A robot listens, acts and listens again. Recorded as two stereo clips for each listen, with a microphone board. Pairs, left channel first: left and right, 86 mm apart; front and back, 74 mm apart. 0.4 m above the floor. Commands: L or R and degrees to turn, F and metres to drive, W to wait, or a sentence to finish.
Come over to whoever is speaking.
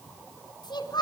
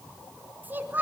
L120
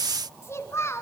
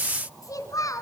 L35
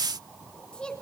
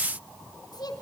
L10
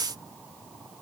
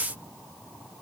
W
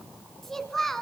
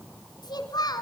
F1.0
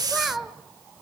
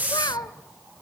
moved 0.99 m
F1.0
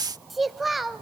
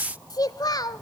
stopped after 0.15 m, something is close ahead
I am next to the child speaking.